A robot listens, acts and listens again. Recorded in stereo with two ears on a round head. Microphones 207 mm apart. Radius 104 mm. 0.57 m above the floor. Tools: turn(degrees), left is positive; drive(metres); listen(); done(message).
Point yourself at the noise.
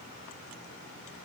listen()
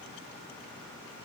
listen()
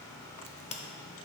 turn(degrees=25)
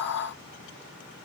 listen()
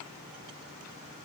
done("I heard a crack, but can't make it out now. It was about straight ahead or 130° left.")